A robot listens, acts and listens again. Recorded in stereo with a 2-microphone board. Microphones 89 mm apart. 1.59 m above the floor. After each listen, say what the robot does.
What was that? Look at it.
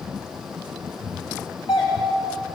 Turn 65° left.
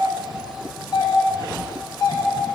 Turn 50° left.
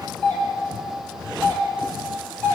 Turn 20° left.
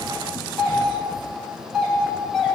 Found it: a doorbell, straight ahead, 2 to 4 m away.